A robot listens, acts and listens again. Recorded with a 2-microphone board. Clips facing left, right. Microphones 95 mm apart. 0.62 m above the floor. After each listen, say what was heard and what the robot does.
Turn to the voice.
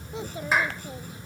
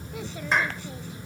The child speaking: about 25° left or 155° left. Turn 25° left.
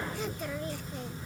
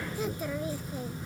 Facing the child speaking.